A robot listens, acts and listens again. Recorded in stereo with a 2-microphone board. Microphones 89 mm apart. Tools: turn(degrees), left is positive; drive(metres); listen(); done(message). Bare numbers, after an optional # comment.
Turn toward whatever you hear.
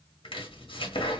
turn(90)
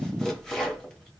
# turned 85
done("Found it: chopping, straight ahead, 1 to 2 m away.")